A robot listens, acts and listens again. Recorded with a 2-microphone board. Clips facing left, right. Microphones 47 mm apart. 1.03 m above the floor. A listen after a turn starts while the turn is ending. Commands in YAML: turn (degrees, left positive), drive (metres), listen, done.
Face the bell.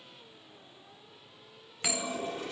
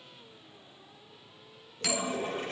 turn: 20
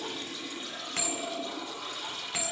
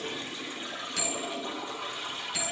turn: 140
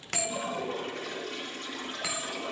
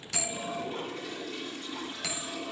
turn: 15
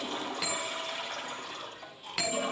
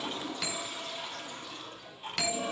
done: "Found it: a bell, straight ahead."